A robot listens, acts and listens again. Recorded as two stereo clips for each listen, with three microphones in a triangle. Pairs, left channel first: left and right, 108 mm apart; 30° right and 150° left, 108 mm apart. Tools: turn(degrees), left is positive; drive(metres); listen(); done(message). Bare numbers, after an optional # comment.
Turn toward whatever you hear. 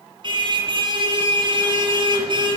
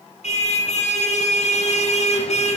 # The car horn: 45° right.
turn(-45)
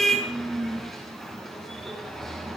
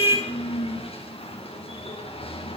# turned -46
done("Facing the car horn.")